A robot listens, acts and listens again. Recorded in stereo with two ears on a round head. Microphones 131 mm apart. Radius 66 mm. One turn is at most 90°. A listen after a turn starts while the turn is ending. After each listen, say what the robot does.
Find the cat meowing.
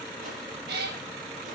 Turn 90° right.
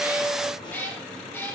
Turn 15° left.
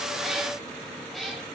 Facing the cat meowing, over 4 m away.